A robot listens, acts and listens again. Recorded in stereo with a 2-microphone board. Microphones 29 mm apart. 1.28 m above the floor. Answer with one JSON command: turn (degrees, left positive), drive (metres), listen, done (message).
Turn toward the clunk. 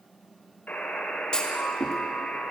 {"turn": 30}
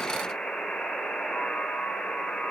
{"listen": true}
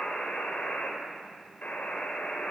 {"done": "I heard a clunk, but can't make it out now. It was about straight ahead or 120° left."}